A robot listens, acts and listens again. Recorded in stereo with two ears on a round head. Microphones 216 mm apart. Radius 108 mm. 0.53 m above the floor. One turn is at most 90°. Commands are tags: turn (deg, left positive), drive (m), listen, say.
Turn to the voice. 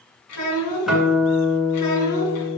<turn deg="90"/>
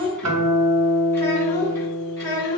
<turn deg="20"/>
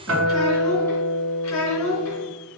<say>Facing the child speaking.</say>